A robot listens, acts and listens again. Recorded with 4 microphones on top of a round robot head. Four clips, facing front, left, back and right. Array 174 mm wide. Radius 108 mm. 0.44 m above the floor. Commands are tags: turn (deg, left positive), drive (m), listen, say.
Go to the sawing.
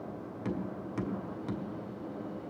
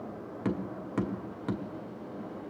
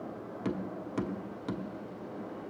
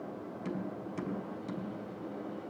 <listen/>
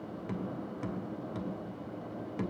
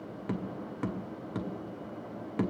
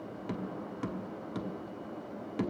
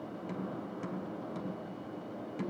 <listen/>
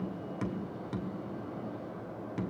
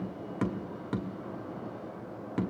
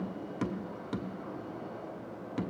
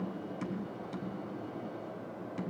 <say>I can't make out sawing, only tapping.</say>